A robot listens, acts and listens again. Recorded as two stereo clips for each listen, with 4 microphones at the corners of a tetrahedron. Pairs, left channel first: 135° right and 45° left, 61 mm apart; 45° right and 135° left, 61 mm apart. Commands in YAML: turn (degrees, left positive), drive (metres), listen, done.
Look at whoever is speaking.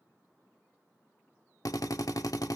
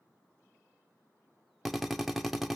listen: true
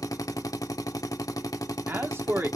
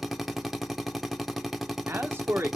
turn: 90
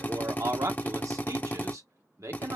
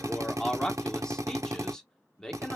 turn: 30
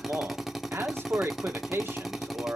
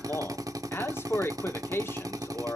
done: "Found it: a man speaking, straight ahead, 1 to 2 m away."